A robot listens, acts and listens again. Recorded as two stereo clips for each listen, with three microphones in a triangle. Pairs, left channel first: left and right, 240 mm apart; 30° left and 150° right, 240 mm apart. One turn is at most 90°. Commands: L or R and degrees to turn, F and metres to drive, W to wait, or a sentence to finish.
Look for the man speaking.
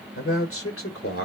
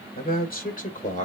L85
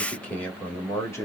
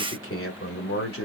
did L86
L15
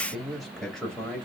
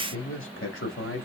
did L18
Found it: a man speaking, straight ahead, 2 to 4 m away.